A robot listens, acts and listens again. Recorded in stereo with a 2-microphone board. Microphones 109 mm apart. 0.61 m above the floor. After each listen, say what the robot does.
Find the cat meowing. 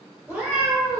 Turn 30° left.
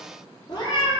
Turn 135° left.
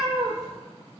Turn 35° right.
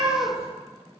Found it: a cat meowing, straight ahead.